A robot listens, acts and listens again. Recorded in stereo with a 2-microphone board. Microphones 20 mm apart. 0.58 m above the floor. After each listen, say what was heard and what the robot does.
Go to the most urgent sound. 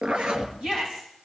The shout: about 50° right or 130° right. Turn 50° right.
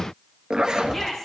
Drive 1.0 m forward.
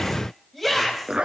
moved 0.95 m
Drive 1.0 m forward.
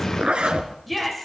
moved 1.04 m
Drive 1.0 m forward.
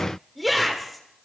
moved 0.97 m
Drive 1.0 m forward.
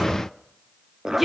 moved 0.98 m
The shout is now 15° right. Turn 15° right.
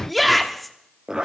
Drive 1.0 m forward.
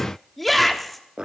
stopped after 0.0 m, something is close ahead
Arrived at the shout, straight ahead.